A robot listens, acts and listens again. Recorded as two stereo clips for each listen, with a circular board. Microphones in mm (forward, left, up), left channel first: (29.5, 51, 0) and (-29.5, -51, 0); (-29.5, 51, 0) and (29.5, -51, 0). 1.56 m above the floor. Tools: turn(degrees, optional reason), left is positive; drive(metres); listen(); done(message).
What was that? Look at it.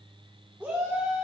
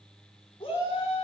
turn(degrees=165, reason="The shout: 165° left.")
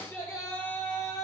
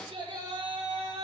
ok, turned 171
turn(degrees=-10, reason="The shout is now 10° right.")
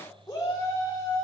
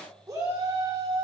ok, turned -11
done("Facing the shout, over 4 m away.")